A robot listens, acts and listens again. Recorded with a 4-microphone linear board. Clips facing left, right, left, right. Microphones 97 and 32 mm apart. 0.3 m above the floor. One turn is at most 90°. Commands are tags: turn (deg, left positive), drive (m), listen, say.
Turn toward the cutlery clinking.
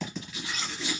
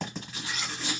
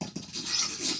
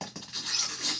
<turn deg="30"/>
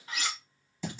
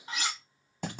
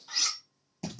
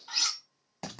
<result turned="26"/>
<turn deg="-25"/>
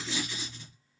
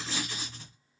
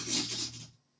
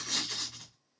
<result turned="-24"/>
<listen/>
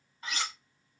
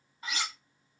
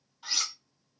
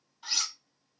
<say>Found it: cutlery clinking, straight ahead, 1 to 2 m away.</say>